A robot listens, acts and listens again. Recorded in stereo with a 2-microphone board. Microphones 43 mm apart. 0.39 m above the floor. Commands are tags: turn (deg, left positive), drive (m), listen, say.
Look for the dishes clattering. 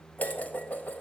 <turn deg="40"/>
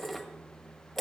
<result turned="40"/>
<say>Found it: dishes clattering, straight ahead.</say>